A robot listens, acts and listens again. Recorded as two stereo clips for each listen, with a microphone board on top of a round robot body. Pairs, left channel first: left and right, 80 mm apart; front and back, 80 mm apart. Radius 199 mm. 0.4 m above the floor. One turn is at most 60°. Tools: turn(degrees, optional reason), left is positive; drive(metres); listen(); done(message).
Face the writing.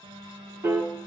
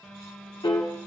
listen()
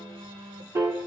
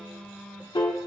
listen()
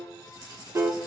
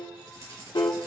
turn(degrees=-60, reason="The writing: 130° right.")
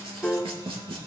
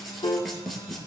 turn(degrees=-60, reason="The writing is now 90° right.")
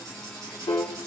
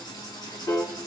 turn(degrees=-40, reason="The writing is now 40° right.")
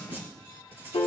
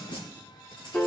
turn(degrees=-25, reason="The writing is now 25° right.")
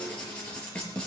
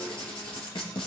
turn(degrees=15, reason="The writing is now 15° left.")
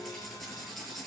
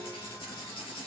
done("Found it: writing, straight ahead.")